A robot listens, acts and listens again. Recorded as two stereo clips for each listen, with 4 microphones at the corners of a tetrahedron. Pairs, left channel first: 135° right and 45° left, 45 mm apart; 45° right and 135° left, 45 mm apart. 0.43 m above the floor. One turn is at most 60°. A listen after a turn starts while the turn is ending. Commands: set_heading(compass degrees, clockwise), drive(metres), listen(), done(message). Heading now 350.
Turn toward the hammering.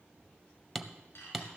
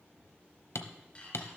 set_heading(30)
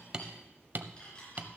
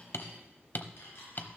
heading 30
done("Found it: hammering, straight ahead.")